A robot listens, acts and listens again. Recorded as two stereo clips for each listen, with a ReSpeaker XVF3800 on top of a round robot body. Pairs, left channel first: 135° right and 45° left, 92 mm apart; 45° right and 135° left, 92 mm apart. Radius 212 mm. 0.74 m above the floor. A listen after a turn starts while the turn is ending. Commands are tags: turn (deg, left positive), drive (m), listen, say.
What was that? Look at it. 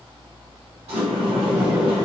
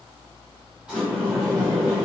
<turn deg="55"/>
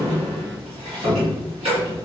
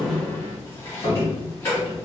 <turn deg="20"/>
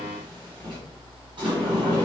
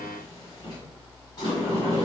<say>Found it: a sliding door, straight ahead.</say>